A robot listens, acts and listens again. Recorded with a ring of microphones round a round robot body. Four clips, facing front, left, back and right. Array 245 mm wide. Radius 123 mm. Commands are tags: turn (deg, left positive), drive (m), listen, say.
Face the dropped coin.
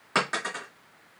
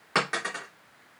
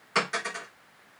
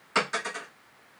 <turn deg="50"/>
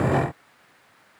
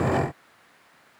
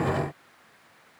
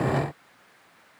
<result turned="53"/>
<say>Facing where the dropped coin came from. I can't hear it now.</say>